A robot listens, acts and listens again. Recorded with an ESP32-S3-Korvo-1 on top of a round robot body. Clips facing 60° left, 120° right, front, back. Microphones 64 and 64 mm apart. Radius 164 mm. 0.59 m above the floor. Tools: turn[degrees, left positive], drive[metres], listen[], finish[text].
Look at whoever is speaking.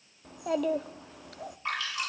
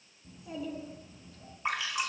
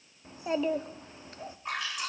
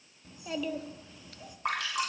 Thought: The child speaking: 60° left.
Action: turn[60]
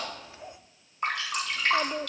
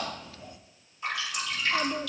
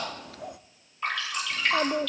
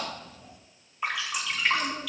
Action: finish[Found it: a child speaking, straight ahead.]